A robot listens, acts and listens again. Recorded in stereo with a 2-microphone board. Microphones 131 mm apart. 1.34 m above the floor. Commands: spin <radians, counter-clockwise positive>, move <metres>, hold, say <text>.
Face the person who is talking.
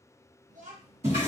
spin -1.57
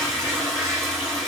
hold
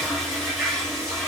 hold
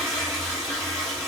say I heard a child speaking from this way, but can't make it out now.